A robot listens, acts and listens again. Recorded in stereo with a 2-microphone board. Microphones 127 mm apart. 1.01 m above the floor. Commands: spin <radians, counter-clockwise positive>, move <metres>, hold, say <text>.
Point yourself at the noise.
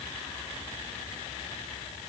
hold
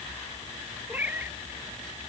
spin -0.52
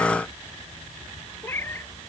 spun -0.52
spin 0.35
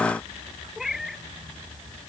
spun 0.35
say Found it: a cat meowing, straight ahead.